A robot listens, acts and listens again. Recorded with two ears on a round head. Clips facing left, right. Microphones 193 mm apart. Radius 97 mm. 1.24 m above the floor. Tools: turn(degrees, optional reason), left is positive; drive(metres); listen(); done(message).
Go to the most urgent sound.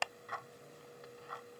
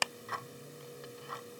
listen()
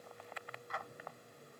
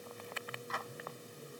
listen()
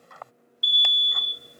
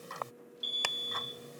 turn(degrees=20, reason="The alarm: about 20° left or 160° left.")
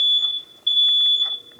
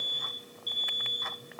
turn(degrees=140, reason="So it is at 140° left.")
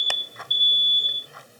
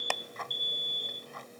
turn(degrees=30, reason="The alarm is now 30° left.")
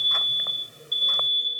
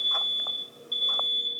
drive(metres=1.0)
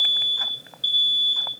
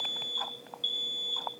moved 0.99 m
turn(degrees=10, reason="The alarm is now 10° left.")
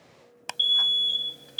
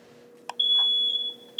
drive(metres=1.0)
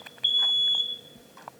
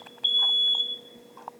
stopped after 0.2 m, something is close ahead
done("Arrived at the alarm, straight ahead.")